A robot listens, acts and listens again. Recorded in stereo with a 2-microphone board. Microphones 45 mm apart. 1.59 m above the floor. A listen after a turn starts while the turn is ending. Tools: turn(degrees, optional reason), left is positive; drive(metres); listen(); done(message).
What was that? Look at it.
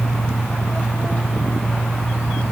listen()
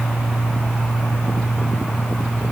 listen()
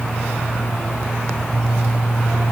done("I can't make out anything.")